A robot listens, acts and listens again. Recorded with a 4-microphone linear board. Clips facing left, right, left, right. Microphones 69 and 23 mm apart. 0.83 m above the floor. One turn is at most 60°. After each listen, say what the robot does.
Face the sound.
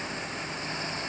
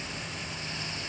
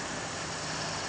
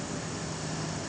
Keep listening.
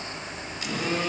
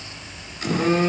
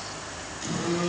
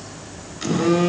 Turn 40° right.
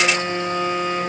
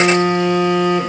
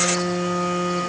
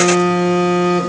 Turn 60° right.
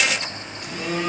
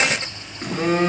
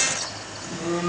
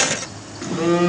Turn 45° right.
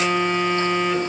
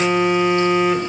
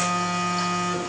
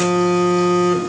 Facing the phone buzzing.